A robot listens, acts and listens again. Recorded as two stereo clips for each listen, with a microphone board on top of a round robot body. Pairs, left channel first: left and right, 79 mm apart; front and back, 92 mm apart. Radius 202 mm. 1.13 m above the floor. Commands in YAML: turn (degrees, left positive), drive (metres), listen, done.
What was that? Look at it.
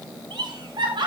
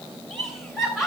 turn: -95
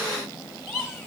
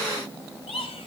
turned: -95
done: "Facing the laughter, 2 to 4 m away."